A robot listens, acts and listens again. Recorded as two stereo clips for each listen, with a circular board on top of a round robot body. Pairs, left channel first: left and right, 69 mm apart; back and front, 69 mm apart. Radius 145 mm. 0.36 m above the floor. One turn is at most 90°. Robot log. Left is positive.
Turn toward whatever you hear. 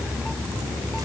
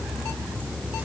cmd idle
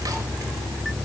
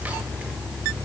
cmd idle
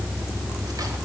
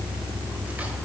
end: I can't make out anything.